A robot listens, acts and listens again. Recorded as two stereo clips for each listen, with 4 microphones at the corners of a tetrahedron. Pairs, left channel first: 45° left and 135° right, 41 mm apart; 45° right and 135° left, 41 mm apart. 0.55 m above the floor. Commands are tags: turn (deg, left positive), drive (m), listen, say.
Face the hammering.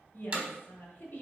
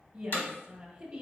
<turn deg="-75"/>
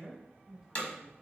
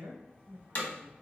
<say>Found it: hammering, straight ahead.</say>